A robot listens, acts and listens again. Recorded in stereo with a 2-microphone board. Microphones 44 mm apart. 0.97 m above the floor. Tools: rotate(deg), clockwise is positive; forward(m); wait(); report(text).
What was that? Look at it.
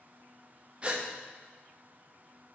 rotate(30)
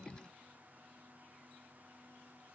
wait()
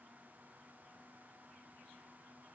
report("I heard a gasp, but can't make it out now. It was about straight ahead or 120° right.")